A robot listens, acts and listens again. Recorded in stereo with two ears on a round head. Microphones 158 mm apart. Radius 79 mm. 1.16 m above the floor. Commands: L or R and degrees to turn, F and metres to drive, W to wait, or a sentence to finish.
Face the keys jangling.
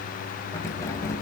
L20
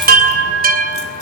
W
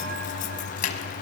L135
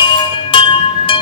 W
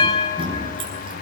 R30
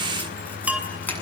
L10
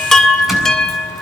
W
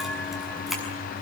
Facing the keys jangling.